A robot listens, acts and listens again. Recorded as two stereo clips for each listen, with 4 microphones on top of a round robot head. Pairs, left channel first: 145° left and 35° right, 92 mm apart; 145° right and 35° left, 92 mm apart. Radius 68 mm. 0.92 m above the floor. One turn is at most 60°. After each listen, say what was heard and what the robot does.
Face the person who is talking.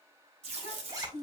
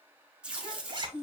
The child speaking: 85° right. Turn 60° right.
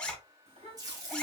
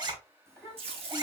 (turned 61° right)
The child speaking is now 30° right. Turn 30° right.
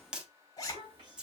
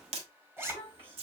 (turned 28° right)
Facing the child speaking, 2 to 4 m away.